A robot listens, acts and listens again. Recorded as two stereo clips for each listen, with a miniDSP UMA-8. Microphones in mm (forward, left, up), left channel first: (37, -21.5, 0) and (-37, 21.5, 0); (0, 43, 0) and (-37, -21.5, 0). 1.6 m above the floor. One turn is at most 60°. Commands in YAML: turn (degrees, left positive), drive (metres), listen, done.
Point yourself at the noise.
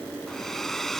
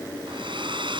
turn: -60
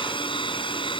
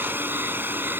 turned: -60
turn: -55
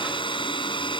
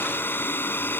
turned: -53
done: "Found it: a hair dryer, straight ahead."